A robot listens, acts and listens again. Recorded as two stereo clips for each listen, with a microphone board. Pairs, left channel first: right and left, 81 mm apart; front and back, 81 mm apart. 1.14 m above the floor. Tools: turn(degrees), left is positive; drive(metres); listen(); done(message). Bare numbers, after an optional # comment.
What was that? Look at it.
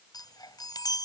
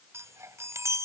# The chime: 125° right.
turn(-125)
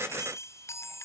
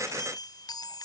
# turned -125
# The chime is now 35° right.
turn(-35)
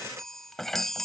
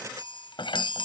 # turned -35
done("Facing the chime.")